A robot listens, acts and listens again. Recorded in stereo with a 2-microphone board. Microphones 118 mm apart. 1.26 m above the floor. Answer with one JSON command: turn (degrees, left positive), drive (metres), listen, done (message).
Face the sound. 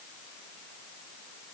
{"listen": true}
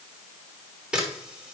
{"turn": -30}
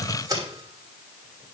{"turn": -145}
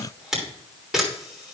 {"done": "Found it: a camera shutter, straight ahead, 2 to 4 m away."}